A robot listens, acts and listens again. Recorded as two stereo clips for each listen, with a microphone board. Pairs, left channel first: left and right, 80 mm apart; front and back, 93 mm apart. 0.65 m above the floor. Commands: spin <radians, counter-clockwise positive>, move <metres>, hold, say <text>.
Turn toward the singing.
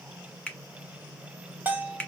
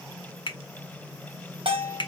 hold
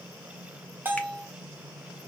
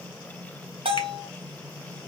hold
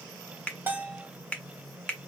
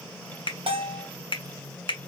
say I can't make out singing to turn to.